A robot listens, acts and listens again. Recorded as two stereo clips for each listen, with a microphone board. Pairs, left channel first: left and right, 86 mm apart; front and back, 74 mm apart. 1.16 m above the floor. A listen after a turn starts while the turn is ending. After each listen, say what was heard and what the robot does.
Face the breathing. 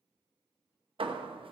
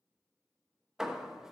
Keep listening.
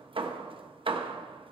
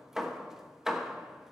Keep listening.
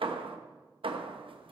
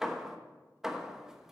I can't make out breathing, only hammering.